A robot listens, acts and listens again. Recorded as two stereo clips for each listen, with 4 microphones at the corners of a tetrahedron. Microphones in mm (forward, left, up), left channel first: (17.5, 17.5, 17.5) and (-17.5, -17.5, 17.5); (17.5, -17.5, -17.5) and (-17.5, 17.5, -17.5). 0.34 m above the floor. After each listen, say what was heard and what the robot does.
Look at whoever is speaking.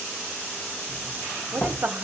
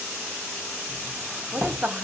The woman speaking: 170° right. Turn 170° right.
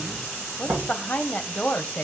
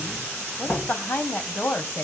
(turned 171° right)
Facing the woman speaking.